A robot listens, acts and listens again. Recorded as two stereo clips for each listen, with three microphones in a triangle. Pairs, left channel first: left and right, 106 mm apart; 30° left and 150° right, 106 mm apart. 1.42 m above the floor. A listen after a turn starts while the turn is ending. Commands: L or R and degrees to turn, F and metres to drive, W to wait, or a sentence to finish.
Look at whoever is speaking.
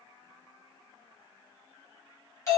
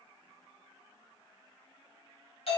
W
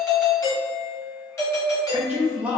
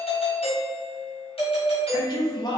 R15
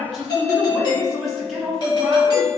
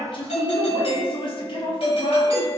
Found it: a man speaking, straight ahead.